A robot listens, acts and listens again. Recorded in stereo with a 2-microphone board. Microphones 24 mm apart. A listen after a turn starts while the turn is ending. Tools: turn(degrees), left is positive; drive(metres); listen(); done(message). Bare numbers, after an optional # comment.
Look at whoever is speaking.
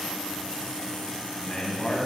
# The man speaking: about 55° left or 125° left.
turn(55)
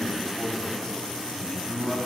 # So it is at 30° left.
turn(30)
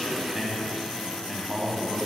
done("Found it: a man speaking, straight ahead.")